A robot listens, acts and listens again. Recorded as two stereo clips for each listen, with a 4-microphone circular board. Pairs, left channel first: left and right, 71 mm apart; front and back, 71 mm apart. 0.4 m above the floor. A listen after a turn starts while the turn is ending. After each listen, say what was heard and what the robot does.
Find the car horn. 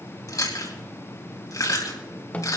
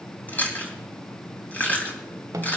Keep listening.
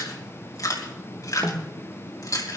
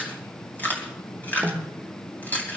Keep listening.
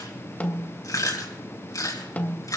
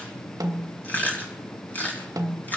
I can't make out a car horn, only chewing and a snare drum.